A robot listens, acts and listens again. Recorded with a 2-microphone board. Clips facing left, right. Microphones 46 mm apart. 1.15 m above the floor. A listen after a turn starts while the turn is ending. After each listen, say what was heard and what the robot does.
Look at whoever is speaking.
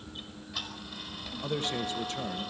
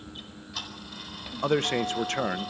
The man speaking: about 60° right or 120° right. Turn 60° right.
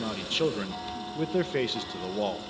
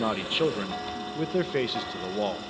Found it: a man speaking, straight ahead, under 1 m away.